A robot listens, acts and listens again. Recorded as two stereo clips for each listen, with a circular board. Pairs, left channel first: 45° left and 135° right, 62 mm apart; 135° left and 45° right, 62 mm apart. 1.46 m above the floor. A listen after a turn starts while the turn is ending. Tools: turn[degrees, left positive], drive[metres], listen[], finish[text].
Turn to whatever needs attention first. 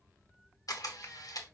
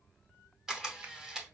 Action: listen[]
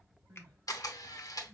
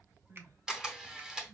Thought: The crying: 65° right.
Action: turn[-65]
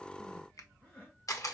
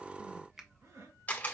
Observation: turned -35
Thought: The crying is now 25° right.
Action: turn[-25]
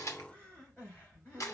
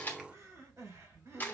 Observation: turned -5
Thought: The crying is now 20° right.
Action: turn[-20]
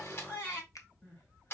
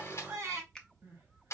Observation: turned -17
Action: finish[Facing the crying, 2 to 4 m away.]